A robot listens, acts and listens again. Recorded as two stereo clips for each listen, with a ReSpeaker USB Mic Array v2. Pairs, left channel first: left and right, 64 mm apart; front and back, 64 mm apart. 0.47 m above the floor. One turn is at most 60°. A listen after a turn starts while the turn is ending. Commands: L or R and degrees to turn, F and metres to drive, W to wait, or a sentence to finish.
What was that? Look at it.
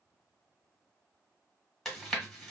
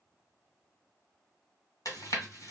Facing the chewing.